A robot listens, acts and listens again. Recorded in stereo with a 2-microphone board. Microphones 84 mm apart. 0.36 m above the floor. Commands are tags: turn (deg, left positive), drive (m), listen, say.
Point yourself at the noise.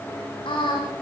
<turn deg="90"/>
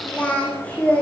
<turn deg="15"/>
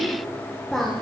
<say>Found it: singing, straight ahead.</say>